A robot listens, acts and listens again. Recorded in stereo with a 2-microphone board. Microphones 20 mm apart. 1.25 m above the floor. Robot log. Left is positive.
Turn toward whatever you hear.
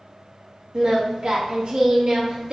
note: The singing: about 50° right or 130° right.
cmd yaw -50
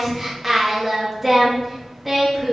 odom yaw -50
note: So it is at 10° right.
cmd yaw -10
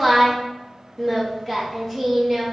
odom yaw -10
end: Facing the singing, 1 to 2 m away.